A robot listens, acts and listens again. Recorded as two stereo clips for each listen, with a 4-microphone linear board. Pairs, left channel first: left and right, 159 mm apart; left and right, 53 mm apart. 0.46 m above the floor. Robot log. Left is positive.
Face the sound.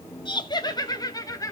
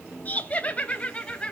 note: The laughter: about 20° left or 160° left.
cmd yaw +20
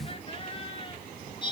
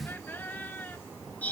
note: The laughter: about 30° left or 150° left.
cmd yaw +30
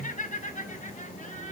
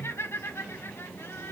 note: So it is at 130° left.
cmd yaw +130
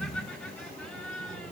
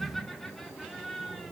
end: Facing the laughter, over 4 m away.